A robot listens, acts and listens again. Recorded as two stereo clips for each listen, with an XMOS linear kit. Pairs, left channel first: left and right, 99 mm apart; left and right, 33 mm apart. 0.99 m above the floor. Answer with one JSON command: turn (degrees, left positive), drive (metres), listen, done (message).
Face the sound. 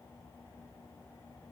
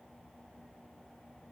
{"listen": true}
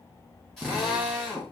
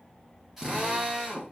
{"turn": 30}
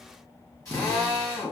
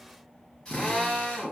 {"turn": 145}
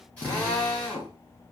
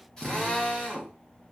{"turn": 15}
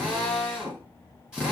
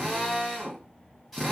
{"done": "Facing the drill."}